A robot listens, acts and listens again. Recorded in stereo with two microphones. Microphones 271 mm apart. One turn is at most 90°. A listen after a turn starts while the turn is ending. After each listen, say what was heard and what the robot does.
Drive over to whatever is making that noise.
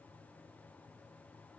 Keep listening.
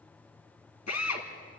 The drill: about 75° left or 105° left. Turn 75° left.
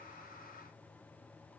Keep listening.
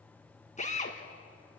So it is at 25° left. Turn 25° left.
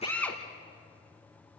Drive 1.0 m forward.
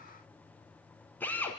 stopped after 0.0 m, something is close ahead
Something is in my way. I am facing the drill but have not reached it.